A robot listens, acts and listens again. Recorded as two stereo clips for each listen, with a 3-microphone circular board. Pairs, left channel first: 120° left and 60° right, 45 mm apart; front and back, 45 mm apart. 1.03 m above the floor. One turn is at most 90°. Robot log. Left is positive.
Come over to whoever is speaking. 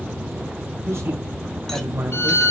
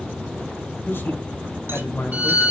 note: The man speaking: 35° right.
cmd yaw -35
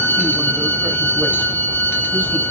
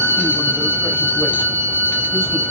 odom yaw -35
cmd idle
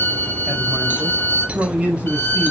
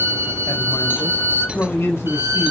cmd fwd 1.0
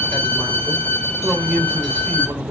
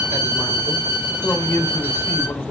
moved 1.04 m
cmd fwd 1.0
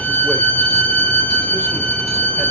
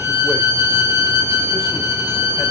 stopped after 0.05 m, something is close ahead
cmd idle
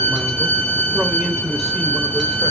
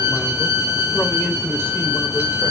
cmd idle
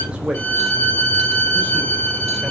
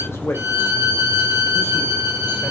note: The man speaking is now 10° left.
cmd yaw +10
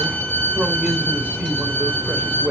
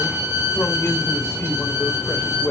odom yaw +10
end: Blocked. The man speaking is further on, straight ahead.